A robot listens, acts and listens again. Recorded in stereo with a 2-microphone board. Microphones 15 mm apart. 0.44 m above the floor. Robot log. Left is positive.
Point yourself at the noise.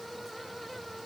cmd idle
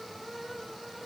cmd idle
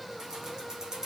note: The keys jangling: about 40° right or 140° right.
cmd yaw -40
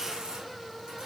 note: So it is at 105° right.
cmd yaw -105
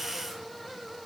cmd idle
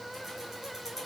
cmd idle
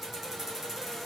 note: The keys jangling is now 15° right.
cmd yaw -15
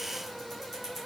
end: Facing the keys jangling, over 4 m away.